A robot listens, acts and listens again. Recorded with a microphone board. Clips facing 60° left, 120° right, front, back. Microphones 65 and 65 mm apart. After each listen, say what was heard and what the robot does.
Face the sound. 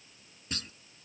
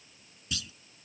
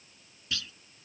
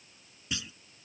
The clunk: 105° left. Turn 105° left.
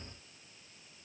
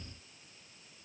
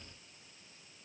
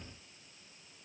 Facing where the clunk came from. I can't hear it now.